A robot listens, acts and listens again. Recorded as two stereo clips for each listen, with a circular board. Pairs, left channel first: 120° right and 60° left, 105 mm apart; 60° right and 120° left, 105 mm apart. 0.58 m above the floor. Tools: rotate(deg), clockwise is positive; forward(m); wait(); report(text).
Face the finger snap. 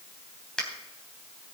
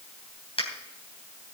rotate(35)
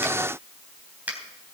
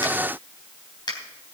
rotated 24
rotate(15)
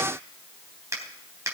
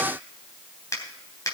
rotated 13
report("Facing the finger snap, 2 to 4 m away.")